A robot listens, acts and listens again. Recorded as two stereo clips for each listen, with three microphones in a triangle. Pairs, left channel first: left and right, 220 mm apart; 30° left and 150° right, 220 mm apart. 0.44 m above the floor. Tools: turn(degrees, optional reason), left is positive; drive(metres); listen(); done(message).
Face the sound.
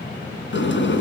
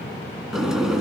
turn(degrees=120, reason="The sliding door: 120° left.")
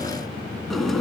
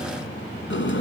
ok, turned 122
done("Found it: a sliding door, straight ahead, 2 to 4 m away.")